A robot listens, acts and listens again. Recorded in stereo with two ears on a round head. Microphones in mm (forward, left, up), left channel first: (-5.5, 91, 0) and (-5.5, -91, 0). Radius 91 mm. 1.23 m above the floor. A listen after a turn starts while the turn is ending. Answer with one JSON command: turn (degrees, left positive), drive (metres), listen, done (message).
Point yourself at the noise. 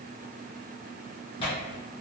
{"turn": 25}
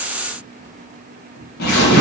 {"turn": 125}
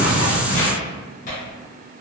{"turn": 45}
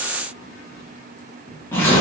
{"turn": 15}
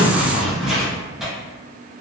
{"done": "Found it: tearing paper, straight ahead, 1 to 2 m away."}